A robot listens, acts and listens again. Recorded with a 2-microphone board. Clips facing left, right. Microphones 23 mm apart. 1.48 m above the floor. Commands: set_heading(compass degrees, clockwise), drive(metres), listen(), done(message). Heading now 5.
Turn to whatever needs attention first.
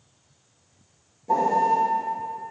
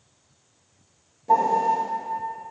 listen()
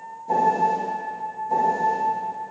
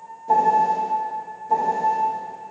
listen()
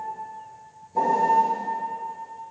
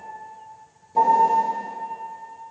done("I can't make out anything urgent to turn to.")